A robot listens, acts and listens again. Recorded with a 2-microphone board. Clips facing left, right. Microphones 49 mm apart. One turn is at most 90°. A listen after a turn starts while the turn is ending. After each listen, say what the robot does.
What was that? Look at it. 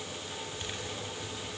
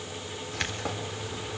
Turn 90° right.
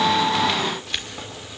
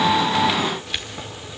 Found it: keys jangling, straight ahead.